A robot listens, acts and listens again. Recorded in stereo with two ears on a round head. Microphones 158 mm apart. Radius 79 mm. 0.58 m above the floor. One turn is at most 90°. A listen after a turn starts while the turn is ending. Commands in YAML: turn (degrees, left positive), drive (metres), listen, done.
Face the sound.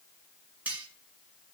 turn: -30
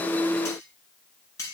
turn: 20
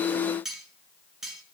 done: "Facing the cutlery clinking."